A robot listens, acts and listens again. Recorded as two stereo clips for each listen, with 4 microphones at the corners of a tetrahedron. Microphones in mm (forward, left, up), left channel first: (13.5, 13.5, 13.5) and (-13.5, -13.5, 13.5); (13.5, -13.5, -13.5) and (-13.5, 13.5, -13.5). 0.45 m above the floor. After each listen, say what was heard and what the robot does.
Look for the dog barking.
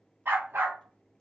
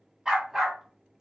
The dog barking: 140° right. Turn 140° right.
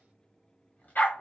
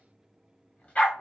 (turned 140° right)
The dog barking is now 10° left. Turn 10° left.
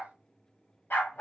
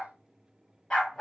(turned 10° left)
The dog barking is now 25° left. Turn 25° left.
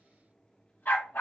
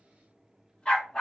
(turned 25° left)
The dog barking is now 20° left. Turn 20° left.
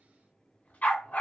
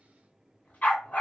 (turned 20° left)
Found it: a dog barking, straight ahead.